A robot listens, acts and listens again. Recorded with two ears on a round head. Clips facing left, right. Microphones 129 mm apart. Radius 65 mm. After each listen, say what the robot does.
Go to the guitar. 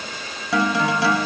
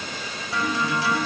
Turn 60° left.
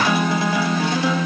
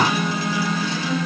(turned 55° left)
Turn 55° left.
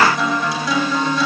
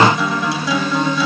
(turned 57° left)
Drive 1.0 m forward.
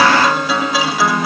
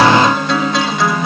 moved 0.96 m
Drive 1.0 m forward.
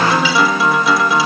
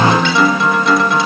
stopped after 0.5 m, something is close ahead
Arrived at the guitar, straight ahead.